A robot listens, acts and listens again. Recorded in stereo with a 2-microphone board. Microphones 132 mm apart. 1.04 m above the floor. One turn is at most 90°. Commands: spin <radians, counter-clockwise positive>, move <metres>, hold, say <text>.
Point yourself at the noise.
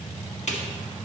spin 1.05
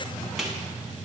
say Found it: a snare drum, straight ahead.